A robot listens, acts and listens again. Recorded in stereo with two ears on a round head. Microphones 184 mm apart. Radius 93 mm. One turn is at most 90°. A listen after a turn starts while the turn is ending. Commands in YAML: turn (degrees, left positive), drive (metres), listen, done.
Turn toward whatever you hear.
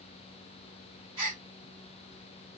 turn: -25
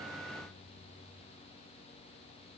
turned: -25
listen: true
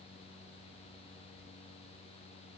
done: "I heard a gasp, but can't make it out now. It was about straight ahead or 130° right."